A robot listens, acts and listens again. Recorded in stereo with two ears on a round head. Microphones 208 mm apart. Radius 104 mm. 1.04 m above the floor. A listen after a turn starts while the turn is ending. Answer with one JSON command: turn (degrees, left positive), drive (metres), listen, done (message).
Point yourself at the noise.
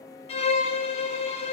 {"turn": 25}
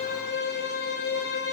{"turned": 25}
{"turn": 125}
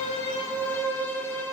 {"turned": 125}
{"turn": 10}
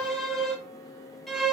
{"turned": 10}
{"done": "Facing the violin, 1 to 2 m away."}